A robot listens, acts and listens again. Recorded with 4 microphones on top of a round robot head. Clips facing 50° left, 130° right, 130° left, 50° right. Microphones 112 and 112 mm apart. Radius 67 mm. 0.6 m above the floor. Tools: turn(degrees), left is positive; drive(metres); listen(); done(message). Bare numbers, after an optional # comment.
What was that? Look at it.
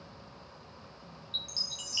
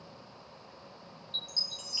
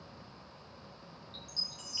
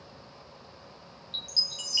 # The chime: 30° right.
turn(-30)
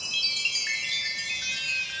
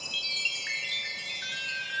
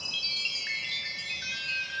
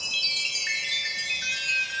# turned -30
done("Facing the chime, 1 to 2 m away.")